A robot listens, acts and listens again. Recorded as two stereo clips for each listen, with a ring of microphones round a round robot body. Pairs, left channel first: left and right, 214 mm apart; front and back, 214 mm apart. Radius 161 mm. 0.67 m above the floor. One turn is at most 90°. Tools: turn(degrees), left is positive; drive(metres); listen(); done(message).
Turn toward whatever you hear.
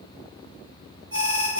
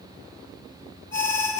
turn(degrees=-65)
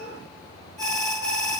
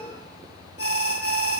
done("Facing the alarm, over 4 m away.")